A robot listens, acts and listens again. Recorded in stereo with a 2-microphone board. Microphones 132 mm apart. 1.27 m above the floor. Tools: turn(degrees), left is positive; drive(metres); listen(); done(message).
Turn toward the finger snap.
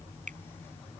turn(degrees=-75)
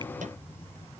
listen()
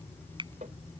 turn(degrees=-35)
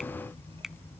done("Facing the finger snap.")